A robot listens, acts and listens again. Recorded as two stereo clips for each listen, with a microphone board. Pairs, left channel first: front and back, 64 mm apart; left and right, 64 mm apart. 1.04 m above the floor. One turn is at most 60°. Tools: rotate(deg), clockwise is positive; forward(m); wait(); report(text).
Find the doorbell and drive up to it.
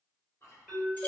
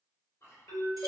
rotate(-60)
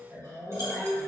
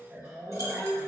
rotate(-20)
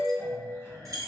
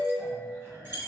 forward(1.0)
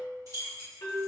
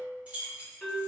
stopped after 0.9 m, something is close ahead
rotate(-10)
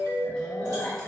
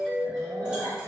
report("I am next to the doorbell.")